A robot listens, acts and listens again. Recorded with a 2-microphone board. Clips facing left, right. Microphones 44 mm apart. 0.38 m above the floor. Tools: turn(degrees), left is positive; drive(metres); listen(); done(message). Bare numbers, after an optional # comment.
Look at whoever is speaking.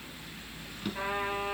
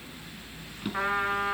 listen()
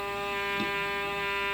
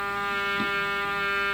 listen()
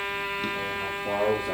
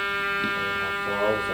# The man speaking: about 40° left or 140° left.
turn(40)
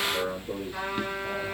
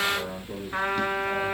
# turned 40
# So it is at 100° left.
turn(100)
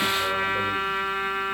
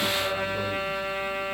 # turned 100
listen()
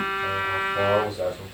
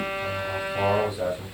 # The man speaking is now 15° right.
turn(-15)
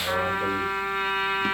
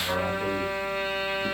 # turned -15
listen()
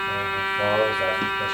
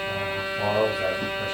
done("Found it: a man speaking, straight ahead, over 4 m away.")